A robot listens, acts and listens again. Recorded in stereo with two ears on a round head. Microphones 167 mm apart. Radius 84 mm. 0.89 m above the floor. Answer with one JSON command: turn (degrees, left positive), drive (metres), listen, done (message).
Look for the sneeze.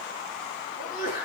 {"turn": 45}
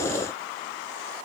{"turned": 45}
{"listen": true}
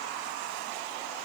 {"done": "I heard a sneeze, but can't make it out now. It was about straight ahead or 90° left."}